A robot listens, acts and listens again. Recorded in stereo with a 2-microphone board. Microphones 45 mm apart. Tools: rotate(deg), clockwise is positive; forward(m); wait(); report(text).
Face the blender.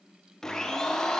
rotate(-30)
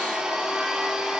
rotate(15)
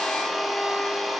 report("Found it: a blender, straight ahead.")